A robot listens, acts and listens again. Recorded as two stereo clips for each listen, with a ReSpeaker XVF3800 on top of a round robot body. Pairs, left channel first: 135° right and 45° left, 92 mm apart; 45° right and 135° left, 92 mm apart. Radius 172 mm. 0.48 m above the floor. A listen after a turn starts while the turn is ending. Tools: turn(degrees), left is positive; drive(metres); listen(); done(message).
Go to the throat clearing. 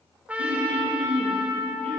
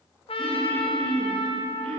turn(degrees=35)
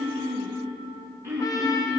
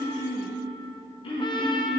turn(degrees=-20)
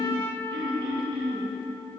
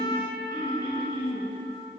drive(metres=1.0)
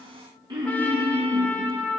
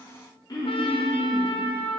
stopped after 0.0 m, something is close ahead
done("Blocked. The throat clearing is further on, straight ahead.")